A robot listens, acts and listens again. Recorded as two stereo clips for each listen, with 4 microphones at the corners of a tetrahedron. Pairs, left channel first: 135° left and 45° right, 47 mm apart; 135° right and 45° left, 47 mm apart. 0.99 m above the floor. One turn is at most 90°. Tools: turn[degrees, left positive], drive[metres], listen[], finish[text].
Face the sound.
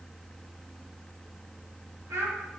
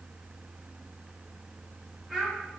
Thought: The child speaking: 40° right.
Action: turn[-40]
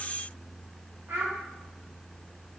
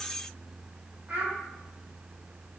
Thought: The child speaking is now 10° right.
Action: turn[-10]
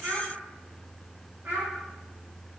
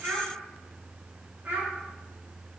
Action: finish[Facing the child speaking.]